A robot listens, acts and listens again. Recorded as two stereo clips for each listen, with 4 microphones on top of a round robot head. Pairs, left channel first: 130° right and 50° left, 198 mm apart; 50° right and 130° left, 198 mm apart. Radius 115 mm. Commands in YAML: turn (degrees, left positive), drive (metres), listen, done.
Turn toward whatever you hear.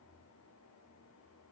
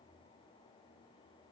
listen: true
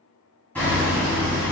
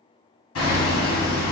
turn: -50
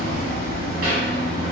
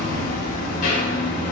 done: "Facing the hammering, 1 to 2 m away."